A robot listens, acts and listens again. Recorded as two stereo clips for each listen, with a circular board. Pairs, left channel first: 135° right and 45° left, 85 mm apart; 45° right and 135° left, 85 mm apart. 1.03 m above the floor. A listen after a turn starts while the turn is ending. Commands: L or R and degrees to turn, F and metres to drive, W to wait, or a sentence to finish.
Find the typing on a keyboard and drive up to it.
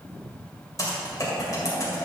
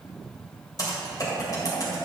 R85
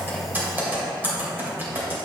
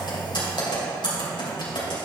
R20
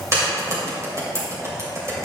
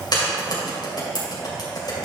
R10
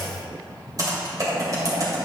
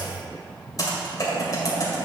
F1.0
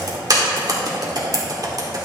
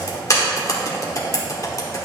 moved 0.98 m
F1.0
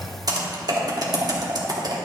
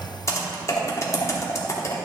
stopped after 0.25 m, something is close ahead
L10
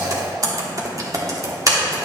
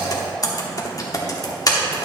Arrived at the typing on a keyboard, straight ahead.